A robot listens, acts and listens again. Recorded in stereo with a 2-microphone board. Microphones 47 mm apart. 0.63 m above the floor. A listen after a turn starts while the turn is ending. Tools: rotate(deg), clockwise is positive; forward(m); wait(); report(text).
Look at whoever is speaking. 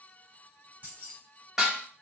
wait()
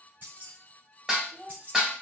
rotate(70)
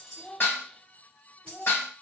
report("Facing the child speaking.")